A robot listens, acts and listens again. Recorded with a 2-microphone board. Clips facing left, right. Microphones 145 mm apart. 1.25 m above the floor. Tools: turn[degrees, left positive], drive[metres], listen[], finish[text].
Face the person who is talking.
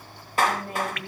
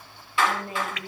Action: turn[30]
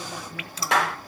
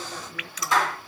Action: listen[]
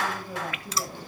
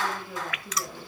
Thought: So it is at 155° left.
Action: turn[155]
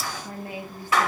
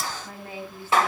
Thought: The woman speaking is now 15° left.
Action: turn[15]
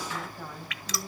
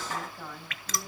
Action: finish[Facing the woman speaking.]